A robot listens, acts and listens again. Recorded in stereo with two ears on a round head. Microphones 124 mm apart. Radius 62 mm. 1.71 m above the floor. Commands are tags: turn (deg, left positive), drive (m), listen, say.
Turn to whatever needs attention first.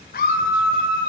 <turn deg="70"/>
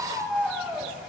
<say>Found it: a scream, straight ahead, 2 to 4 m away.</say>